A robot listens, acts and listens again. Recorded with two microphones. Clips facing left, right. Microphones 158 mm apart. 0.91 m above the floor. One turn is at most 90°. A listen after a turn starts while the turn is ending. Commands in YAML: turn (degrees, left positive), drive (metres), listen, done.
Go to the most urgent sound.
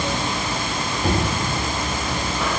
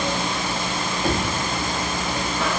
listen: true
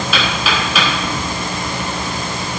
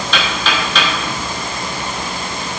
listen: true
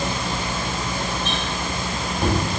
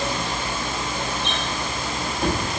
done: "I can't make out anything urgent, only knocking."